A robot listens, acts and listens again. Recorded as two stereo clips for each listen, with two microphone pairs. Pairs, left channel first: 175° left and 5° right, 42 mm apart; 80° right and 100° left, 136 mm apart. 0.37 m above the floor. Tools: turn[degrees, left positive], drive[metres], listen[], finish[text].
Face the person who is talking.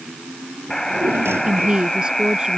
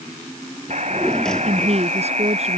Thought: The woman speaking: 65° left.
Action: turn[65]
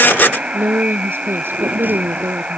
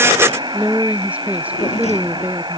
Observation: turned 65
Thought: The woman speaking is now 25° left.
Action: turn[25]
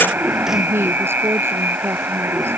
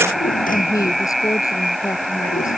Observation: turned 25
Thought: The woman speaking is now 15° right.
Action: turn[-15]
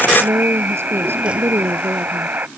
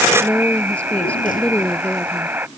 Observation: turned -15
Action: finish[Facing the woman speaking.]